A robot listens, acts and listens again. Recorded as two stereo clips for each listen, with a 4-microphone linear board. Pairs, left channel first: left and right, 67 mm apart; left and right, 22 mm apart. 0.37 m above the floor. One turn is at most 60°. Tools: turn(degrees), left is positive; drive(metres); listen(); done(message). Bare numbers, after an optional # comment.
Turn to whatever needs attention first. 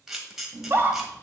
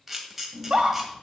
# The scream: about 35° right or 145° right.
turn(-35)
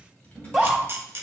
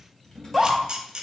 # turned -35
done("Facing the scream, 1 to 2 m away.")